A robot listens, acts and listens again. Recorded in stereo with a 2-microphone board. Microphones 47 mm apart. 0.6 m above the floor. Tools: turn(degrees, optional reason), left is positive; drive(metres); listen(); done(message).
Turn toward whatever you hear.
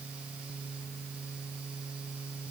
listen()
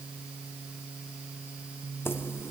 turn(degrees=55, reason="The keys jangling: about 55° left or 125° left.")
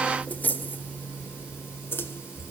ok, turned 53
turn(degrees=50, reason="So it is at 50° left.")
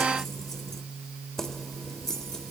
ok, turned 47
turn(degrees=10, reason="The keys jangling is now 10° left.")
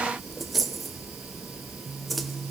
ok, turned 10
done("Facing the keys jangling, 1 to 2 m away.")